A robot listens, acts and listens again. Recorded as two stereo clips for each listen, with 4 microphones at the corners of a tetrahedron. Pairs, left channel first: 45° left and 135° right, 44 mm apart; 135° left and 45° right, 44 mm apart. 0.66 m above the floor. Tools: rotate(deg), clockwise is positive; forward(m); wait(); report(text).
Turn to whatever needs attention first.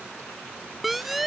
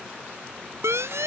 rotate(50)
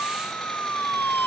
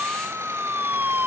report("Found it: a siren, straight ahead.")